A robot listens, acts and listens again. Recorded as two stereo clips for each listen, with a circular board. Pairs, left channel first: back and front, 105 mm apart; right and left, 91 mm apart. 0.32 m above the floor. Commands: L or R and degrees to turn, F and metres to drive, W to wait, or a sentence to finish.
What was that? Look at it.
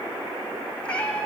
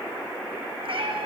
L100
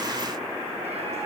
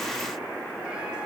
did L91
L10
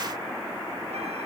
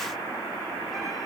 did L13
W
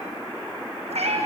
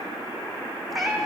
Found it: a cat meowing, straight ahead, 2 to 4 m away.